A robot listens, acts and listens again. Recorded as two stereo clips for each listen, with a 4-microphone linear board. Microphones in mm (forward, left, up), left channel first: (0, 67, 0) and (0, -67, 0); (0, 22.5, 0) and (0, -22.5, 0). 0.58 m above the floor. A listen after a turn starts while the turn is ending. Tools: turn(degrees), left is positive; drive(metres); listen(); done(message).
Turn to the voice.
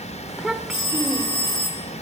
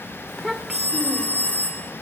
turn(degrees=-30)
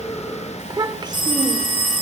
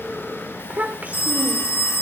turn(degrees=-145)
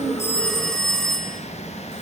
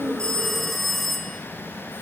listen()
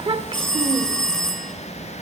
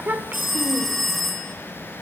turn(degrees=-45)
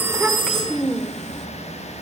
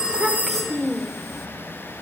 done("Found it: a child speaking, straight ahead, 1 to 2 m away.")